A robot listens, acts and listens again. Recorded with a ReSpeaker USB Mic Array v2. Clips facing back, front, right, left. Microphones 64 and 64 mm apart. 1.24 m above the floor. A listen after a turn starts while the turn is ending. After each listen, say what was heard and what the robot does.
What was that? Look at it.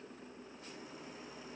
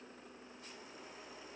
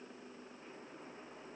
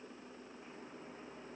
Keep listening.
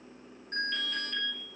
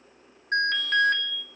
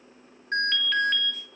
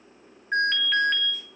Facing the alarm.